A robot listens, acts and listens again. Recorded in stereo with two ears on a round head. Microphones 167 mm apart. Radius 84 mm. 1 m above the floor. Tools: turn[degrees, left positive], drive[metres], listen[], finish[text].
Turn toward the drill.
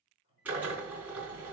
Action: turn[-30]
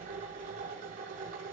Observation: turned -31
Thought: So it is at 140° right.
Action: turn[-140]
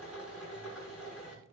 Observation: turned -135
Action: finish[Found it: a drill, straight ahead.]